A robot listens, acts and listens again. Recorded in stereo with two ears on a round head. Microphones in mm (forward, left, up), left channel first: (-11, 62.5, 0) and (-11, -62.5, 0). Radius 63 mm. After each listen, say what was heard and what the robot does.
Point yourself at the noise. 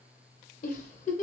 The giggle: about 55° left or 125° left. Turn 55° left.
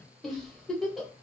Found it: a giggle, straight ahead.